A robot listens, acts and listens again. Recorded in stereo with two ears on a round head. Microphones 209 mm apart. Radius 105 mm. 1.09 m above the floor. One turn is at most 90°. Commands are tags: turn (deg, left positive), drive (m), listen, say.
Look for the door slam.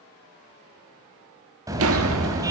<turn deg="-60"/>
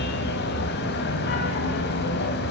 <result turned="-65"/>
<listen/>
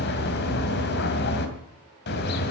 <say>I heard a door slam, but can't make it out now. It was about 5° left or 55° right.</say>